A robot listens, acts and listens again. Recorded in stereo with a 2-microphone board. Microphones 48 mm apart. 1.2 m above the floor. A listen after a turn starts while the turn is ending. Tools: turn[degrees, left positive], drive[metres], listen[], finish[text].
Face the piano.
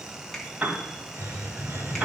Thought: The piano: about 30° right or 150° right.
Action: turn[-30]
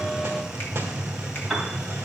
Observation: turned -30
Action: finish[Facing the piano, 1 to 2 m away.]